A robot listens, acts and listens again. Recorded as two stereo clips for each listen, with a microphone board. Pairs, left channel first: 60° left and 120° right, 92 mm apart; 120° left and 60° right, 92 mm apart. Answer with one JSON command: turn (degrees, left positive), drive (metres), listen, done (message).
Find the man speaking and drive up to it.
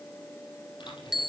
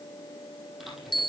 {"listen": true}
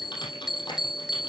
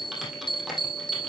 {"listen": true}
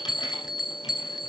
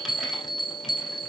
{"done": "I can't make out a man speaking, only typing on a keyboard and a bell."}